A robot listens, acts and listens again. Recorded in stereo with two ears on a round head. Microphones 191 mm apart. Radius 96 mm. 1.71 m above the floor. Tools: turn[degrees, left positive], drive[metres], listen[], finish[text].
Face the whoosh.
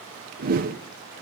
Thought: The whoosh: about 45° right or 135° right.
Action: turn[-45]
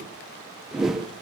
Action: finish[Facing the whoosh, 1 to 2 m away.]